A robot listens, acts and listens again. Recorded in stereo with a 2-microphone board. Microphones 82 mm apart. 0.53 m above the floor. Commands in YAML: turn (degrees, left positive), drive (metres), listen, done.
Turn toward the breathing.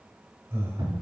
turn: -30
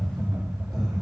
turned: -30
listen: true
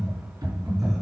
done: "Facing the breathing, 2 to 4 m away."